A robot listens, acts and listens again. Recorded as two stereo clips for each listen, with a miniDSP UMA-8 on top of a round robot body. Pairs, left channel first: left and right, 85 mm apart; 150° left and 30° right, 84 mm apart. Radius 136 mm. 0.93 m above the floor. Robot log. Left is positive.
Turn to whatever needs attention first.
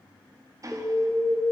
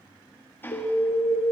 note: The alarm: 175° right.
cmd yaw -175
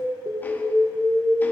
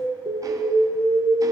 note: The alarm is now 10° right.
cmd yaw -10
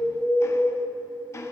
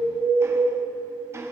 end: Found it: an alarm, straight ahead.